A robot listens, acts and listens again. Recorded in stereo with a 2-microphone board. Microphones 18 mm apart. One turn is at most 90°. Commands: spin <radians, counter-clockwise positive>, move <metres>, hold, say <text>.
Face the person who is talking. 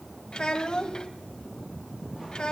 spin 0.87
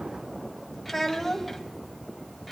spin 0.17
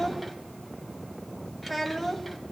say Facing the child speaking, 1 to 2 m away.